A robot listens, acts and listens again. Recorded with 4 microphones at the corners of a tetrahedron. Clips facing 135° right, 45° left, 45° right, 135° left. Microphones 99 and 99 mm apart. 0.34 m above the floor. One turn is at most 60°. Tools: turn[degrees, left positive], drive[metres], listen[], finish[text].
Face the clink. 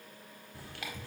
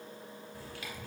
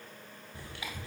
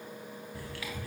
Action: listen[]
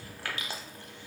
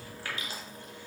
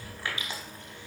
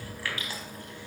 Action: listen[]
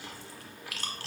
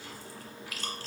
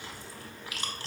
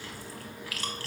Action: finish[I can't make out a clink, only chewing.]